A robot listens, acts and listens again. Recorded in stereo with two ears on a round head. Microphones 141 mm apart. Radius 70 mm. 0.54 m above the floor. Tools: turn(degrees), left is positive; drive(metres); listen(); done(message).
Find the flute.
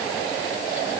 listen()
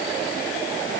listen()
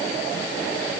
done("I can't make out a flute to turn to.")